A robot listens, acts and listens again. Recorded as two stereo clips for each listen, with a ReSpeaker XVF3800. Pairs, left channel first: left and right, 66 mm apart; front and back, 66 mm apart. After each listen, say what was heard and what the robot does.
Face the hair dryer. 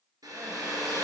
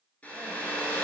The hair dryer: 70° right. Turn 70° right.
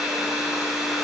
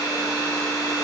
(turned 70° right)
Facing the hair dryer.